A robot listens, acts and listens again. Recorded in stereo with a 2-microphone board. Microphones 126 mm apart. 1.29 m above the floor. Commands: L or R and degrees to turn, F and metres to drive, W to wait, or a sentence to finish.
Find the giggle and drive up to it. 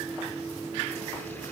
W
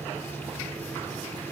W
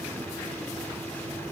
I can't make out a giggle.